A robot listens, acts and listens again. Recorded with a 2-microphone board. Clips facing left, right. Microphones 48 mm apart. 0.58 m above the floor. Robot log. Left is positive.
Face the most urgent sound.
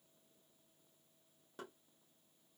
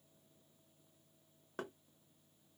cmd idle
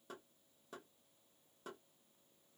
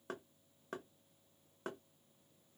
cmd idle
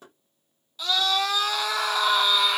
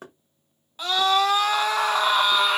note: The scream: about 40° right or 140° right.
cmd yaw -40
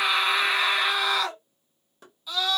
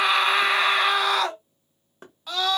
note: So it is at 90° right.
cmd yaw -90
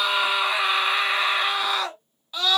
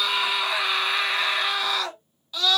note: The scream is now 25° left.
cmd yaw +25
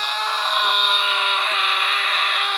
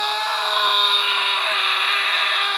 end: Found it: a scream, straight ahead, 1 to 2 m away.